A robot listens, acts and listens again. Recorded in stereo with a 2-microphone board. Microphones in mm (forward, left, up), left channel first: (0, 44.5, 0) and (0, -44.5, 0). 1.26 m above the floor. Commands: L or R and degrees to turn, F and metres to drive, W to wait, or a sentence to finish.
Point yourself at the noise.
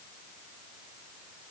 W
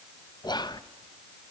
L55
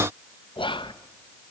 L70
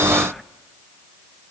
Found it: whispering, straight ahead, 1 to 2 m away.